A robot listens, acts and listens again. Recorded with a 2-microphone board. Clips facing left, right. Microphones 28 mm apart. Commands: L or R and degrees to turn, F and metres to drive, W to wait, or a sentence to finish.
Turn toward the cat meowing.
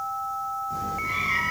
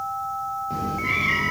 R45
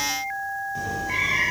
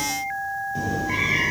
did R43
R10
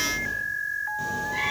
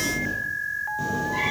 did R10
Facing the cat meowing, over 4 m away.